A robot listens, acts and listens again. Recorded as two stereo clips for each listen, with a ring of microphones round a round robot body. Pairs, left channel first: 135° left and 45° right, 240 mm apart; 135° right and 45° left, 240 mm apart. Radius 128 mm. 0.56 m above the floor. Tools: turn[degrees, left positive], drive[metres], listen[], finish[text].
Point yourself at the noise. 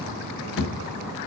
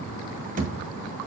Thought: The thud: 100° left.
Action: turn[100]
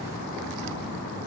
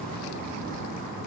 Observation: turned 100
Action: finish[I heard a thud from this way, but can't make it out now.]